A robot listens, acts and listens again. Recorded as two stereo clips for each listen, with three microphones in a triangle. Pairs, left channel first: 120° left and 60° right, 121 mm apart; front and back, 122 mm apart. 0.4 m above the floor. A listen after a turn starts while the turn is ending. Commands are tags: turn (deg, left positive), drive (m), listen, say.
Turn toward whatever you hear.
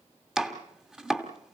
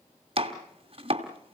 <turn deg="-145"/>
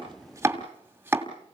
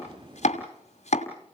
<turn deg="15"/>
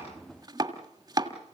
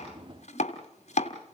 <say>Facing the chopping.</say>